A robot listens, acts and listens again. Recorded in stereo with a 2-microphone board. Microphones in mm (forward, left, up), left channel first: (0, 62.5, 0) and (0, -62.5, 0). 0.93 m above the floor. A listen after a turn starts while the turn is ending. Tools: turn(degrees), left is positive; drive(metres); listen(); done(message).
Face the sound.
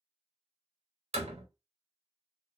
turn(degrees=-60)
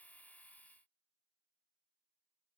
listen()
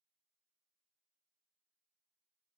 done("I heard a door slam, but can't make it out now. It was about straight ahead or 60° right.")